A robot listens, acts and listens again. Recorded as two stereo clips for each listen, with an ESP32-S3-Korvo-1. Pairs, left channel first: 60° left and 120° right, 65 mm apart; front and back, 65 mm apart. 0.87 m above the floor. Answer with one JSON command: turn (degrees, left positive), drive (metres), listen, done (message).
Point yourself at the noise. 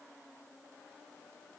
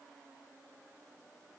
{"listen": true}
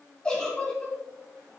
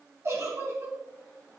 {"turn": 135}
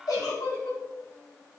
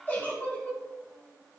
{"turn": 60}
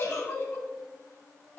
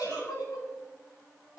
{"turn": 10}
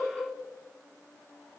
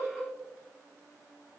{"done": "Found it: a giggle, straight ahead, 2 to 4 m away."}